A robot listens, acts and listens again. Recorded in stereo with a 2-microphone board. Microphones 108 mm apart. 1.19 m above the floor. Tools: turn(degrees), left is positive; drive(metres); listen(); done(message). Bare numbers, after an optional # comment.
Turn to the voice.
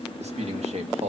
# The man speaking: about 75° right or 105° right.
turn(-75)
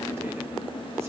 listen()
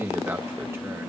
# So it is at 25° right.
turn(-25)
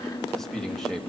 done("Found it: a man speaking, straight ahead.")